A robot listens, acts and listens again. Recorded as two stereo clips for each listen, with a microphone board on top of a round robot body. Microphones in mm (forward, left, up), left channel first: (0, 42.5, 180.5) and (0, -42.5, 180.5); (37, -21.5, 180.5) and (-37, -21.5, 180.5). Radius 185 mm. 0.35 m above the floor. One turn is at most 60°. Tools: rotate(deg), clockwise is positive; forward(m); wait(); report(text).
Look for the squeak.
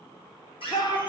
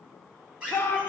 rotate(-60)
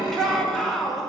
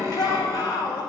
rotate(-45)
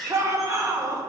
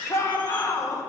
report("Facing the squeak.")